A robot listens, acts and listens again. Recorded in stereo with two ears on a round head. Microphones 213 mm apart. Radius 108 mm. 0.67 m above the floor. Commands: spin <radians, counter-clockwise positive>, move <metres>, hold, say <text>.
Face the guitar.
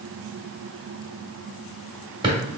hold
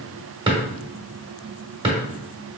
hold
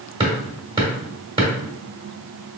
say I can't make out a guitar to turn to.